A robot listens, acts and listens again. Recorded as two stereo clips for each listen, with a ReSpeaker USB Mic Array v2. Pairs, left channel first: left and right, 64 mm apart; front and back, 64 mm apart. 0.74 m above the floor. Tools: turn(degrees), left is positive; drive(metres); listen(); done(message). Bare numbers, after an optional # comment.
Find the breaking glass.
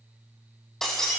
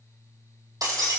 # The breaking glass: 175° left.
turn(175)
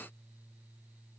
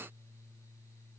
done("I heard breaking glass from this way, but can't make it out now.")